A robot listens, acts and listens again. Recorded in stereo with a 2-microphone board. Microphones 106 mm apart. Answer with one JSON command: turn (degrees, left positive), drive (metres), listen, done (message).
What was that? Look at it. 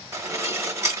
{"turn": -25}
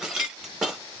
{"done": "Facing the dishes clattering, under 1 m away."}